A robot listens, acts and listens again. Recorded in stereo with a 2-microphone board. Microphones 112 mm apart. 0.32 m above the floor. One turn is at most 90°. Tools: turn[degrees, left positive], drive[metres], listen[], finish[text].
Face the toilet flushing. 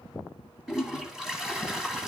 Action: turn[-30]
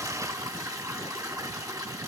Thought: So it is at 145° right.
Action: turn[-90]
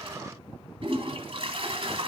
Thought: The toilet flushing is now 60° right.
Action: turn[-60]
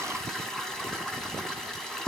Action: finish[Found it: a toilet flushing, straight ahead.]